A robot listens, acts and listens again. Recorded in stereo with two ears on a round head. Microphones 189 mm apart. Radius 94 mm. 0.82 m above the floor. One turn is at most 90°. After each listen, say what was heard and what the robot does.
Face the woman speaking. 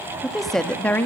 Turn 30° left.
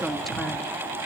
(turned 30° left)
Turn 30° left.
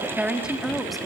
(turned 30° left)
Turn 30° left.
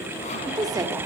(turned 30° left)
So it is at 20° right. Turn 20° right.
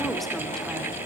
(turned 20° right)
Keep listening.
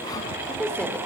Facing the woman speaking.